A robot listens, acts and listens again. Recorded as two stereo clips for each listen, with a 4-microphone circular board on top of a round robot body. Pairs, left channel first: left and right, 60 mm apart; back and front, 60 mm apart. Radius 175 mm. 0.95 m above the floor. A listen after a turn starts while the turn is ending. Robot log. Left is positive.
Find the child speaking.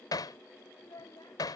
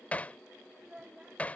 note: The child speaking: 75° left.
cmd yaw +75
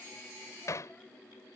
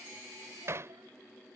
cmd idle
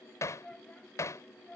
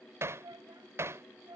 note: The child speaking is now 15° left.
cmd yaw +15
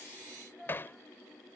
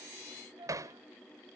end: Found it: a child speaking, straight ahead.